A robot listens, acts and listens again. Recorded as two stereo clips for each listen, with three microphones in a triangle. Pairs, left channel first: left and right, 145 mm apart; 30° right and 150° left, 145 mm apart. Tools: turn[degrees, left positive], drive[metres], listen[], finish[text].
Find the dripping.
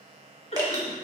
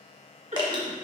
Thought: The dripping: 150° right.
Action: turn[-150]
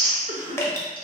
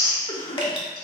Thought: The dripping is now 20° left.
Action: turn[20]
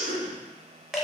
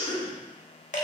Action: finish[Facing the dripping, under 1 m away.]